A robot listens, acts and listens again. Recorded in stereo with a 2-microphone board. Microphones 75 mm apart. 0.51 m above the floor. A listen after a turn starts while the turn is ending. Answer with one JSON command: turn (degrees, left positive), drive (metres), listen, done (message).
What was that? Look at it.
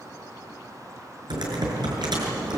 {"turn": -90}
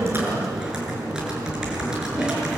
{"turn": -10}
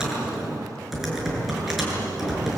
{"done": "Facing the typing on a keyboard."}